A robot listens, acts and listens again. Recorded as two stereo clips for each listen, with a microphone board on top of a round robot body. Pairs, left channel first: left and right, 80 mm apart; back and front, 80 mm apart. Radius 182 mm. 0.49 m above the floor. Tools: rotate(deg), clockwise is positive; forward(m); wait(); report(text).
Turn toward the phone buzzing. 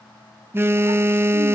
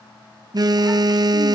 rotate(30)
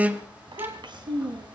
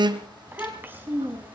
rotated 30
rotate(20)
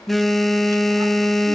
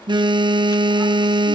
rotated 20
report("Facing the phone buzzing.")